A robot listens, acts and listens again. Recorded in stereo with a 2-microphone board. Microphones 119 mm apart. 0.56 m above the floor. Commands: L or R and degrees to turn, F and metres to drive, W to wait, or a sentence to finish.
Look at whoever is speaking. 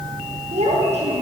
R65
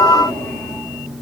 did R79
W
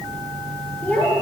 L10
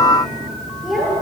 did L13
Facing the child speaking, over 4 m away.